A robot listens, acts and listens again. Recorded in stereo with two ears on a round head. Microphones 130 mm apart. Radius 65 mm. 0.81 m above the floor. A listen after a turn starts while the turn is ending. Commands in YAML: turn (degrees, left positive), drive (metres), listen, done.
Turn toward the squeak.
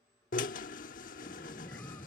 turn: 30
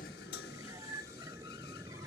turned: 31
turn: -20
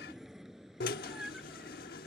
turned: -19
done: "Found it: a squeak, straight ahead."